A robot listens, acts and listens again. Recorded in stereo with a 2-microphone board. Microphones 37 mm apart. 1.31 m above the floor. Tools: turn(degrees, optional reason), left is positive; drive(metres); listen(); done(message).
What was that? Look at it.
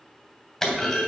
turn(degrees=30)
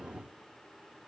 listen()
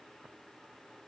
done("I heard a clunk, but can't make it out now. It was about 15° right or 135° left.")